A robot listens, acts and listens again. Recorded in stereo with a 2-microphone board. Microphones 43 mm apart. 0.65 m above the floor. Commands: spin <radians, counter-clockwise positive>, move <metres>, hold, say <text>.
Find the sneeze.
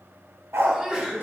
spin -0.26
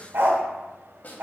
hold
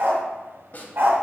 say I heard a sneeze, but can't make it out now. It was about straight ahead or 150° right.